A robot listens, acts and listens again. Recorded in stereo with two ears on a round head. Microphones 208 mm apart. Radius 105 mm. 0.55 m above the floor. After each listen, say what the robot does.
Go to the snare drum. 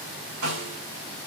Turn 70° right.
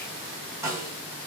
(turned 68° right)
Turn 10° right.
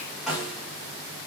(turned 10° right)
Drive 1.0 m forward.
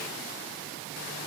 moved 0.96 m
Keep listening.
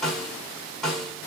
Drive 1.0 m forward.
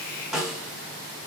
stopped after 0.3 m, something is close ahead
I am next to the snare drum.